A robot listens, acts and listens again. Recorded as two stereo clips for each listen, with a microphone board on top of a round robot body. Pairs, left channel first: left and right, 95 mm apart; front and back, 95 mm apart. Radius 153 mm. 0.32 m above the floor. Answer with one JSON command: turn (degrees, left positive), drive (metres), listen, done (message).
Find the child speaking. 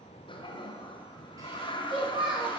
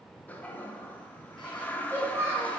{"turn": -120}
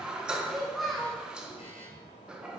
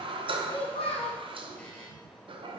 {"done": "Found it: a child speaking, straight ahead, 2 to 4 m away."}